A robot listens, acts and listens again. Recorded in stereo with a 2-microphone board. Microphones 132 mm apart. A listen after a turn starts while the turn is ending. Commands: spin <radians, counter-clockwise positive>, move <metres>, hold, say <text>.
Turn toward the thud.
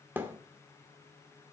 spin -0.26
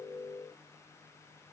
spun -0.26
hold
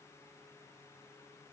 say I heard a thud, but can't make it out now. It was about straight ahead or 150° right.